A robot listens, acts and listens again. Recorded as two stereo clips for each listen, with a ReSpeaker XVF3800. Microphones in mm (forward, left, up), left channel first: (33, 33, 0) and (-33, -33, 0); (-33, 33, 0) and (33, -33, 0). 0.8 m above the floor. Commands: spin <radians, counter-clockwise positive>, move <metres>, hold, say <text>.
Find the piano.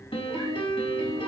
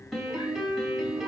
spin 0.79
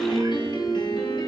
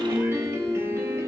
spin 0.26
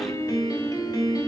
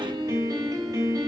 say Facing the piano.